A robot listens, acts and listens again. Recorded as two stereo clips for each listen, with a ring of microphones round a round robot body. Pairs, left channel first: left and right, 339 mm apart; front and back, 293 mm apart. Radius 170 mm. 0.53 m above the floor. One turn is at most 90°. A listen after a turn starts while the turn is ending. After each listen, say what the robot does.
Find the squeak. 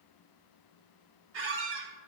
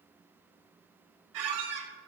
Turn 90° right.
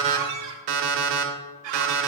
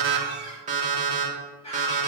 Turn 75° right.
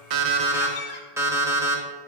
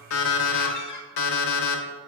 Turn 30° left.
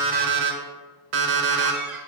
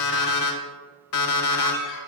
Keep listening.
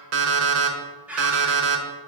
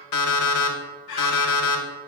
Facing the squeak, 1 to 2 m away.